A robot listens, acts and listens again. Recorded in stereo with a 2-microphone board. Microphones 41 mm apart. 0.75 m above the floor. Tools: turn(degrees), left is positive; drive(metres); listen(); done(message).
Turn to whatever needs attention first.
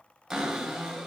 listen()
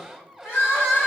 turn(degrees=90)
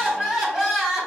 done("Facing the crying.")